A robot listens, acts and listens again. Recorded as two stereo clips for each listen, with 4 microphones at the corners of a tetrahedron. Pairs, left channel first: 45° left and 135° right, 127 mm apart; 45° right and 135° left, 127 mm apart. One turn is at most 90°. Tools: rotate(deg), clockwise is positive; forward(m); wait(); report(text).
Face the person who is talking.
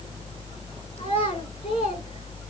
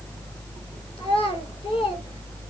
report("Facing the child speaking.")